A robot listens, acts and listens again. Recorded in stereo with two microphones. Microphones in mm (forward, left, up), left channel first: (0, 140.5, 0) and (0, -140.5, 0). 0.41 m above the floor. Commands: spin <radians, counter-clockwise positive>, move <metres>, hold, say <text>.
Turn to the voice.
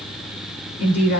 spin 1.13
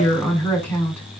say Facing the woman speaking, over 4 m away.